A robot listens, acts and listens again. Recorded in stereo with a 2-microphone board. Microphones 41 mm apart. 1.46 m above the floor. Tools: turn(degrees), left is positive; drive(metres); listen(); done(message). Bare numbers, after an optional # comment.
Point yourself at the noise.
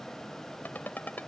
# The ringtone: about 45° left or 135° left.
turn(45)
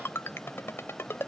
# So it is at 85° left.
turn(85)
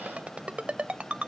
# The ringtone is now 30° right.
turn(-30)
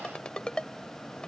# The ringtone is now 20° left.
turn(20)
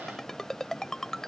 # The ringtone is now 10° left.
turn(10)
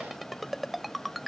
done("Found it: a ringtone, straight ahead.")